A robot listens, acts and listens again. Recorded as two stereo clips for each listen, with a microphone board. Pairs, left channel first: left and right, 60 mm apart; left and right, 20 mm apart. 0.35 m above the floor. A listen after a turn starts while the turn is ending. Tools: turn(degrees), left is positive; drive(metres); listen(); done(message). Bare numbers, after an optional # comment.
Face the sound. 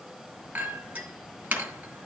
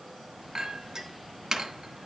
# The clink: about 25° right or 155° right.
turn(-25)
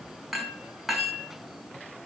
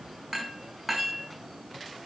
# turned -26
done("Found it: a clink, straight ahead, 2 to 4 m away.")